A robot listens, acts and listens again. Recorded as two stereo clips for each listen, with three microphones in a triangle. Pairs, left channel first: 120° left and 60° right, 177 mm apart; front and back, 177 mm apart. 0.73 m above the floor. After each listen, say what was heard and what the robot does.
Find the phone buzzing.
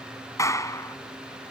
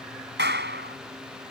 Keep listening.
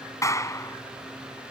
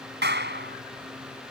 Keep listening.
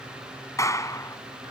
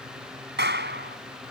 I can't make out a phone buzzing to turn to.